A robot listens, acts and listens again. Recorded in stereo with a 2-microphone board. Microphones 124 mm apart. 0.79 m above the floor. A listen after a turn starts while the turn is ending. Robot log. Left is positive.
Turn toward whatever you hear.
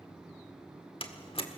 note: The door slam: about 45° left or 135° left.
cmd yaw +45
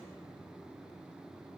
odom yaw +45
cmd idle
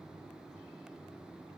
end: I heard a door slam, but can't make it out now. It was about straight ahead or 90° left.